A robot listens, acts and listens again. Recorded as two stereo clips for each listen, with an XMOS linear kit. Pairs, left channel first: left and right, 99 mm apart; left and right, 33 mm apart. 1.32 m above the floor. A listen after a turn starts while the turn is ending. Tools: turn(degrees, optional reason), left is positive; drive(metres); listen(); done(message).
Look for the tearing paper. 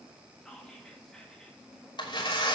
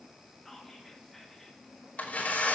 turn(degrees=50, reason="The tearing paper: about 50° left or 130° left.")
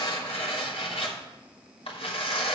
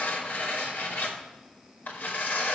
turn(degrees=75, reason="So it is at 75° left.")
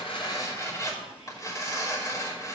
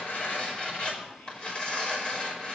turn(degrees=35, reason="The tearing paper is now 35° left.")
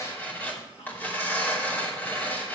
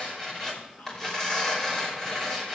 turn(degrees=20, reason="The tearing paper is now 20° left.")
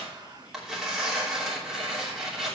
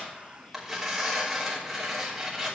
done("Facing the tearing paper.")